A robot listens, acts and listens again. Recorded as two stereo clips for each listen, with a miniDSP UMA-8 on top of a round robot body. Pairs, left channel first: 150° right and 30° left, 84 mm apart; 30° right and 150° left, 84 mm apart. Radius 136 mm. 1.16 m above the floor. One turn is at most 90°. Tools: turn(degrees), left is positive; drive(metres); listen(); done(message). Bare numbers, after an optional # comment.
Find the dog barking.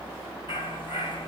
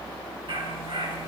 # The dog barking: 175° left.
turn(90)
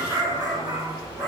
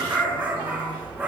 # The dog barking is now 75° left.
turn(75)
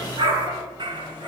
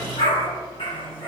# The dog barking is now 15° right.
turn(-15)
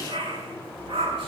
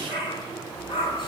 done("Found it: a dog barking, straight ahead, over 4 m away.")